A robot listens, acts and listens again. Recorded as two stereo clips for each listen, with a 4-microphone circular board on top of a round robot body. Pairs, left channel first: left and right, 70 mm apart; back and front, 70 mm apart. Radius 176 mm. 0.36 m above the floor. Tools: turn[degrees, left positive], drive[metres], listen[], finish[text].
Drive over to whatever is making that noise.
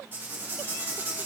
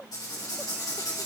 Thought: The writing: 150° right.
Action: turn[-150]
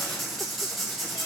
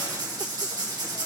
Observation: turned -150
Action: drive[1.0]
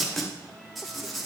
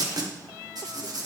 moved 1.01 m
Action: drive[1.0]
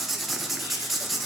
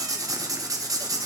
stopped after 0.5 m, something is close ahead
Action: finish[I am next to the writing.]